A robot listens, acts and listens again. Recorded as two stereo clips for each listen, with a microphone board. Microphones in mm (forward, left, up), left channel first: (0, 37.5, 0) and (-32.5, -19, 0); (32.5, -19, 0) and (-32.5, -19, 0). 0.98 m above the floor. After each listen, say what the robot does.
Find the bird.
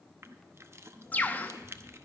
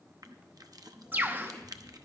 Turn 125° left.
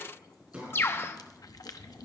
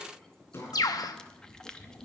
Turn 10° left.
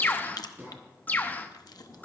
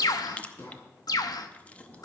Facing the bird, under 1 m away.